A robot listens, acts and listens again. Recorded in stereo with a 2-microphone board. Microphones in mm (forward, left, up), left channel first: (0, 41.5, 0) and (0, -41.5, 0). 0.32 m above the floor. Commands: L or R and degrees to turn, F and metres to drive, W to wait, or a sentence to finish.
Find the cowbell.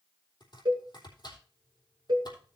R60
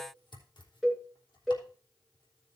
Found it: a cowbell, straight ahead.